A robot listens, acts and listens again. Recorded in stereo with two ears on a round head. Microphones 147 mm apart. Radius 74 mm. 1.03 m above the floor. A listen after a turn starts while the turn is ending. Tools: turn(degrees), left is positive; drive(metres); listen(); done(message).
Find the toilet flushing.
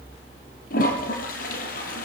turn(degrees=60)
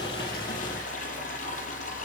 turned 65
turn(degrees=55)
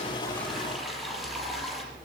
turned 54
done("Found it: a toilet flushing, straight ahead.")